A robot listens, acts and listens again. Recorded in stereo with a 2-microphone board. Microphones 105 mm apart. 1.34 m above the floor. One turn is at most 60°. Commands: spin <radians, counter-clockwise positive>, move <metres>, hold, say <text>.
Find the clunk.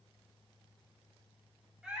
hold
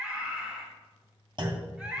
spin -0.87
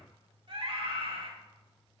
hold
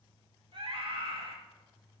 say I heard a clunk, but can't make it out now. It was about straight ahead or 80° right.